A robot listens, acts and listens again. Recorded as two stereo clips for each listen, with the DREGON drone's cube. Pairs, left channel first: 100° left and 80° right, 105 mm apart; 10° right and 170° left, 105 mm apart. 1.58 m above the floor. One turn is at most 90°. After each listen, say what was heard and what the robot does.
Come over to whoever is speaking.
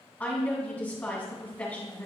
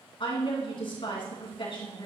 The woman speaking: 25° left. Turn 25° left.
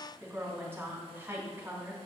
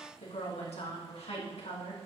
The woman speaking is now 10° right. Turn 10° right.
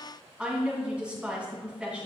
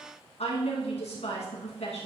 Drive 1.0 m forward.
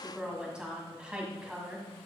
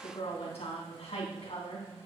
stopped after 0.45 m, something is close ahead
Blocked. The woman speaking is further on, straight ahead.